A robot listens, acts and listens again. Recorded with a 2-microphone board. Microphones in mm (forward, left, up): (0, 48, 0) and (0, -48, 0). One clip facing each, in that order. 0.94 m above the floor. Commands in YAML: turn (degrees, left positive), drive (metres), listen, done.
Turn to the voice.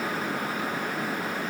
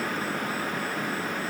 listen: true
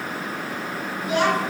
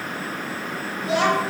turn: -90
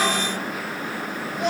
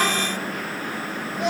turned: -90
done: "Facing the child speaking."